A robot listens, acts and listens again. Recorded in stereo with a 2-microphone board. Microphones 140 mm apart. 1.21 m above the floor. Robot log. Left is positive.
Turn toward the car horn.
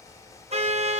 note: The car horn: about 50° right or 130° right.
cmd yaw -50
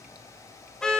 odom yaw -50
end: Facing the car horn, 2 to 4 m away.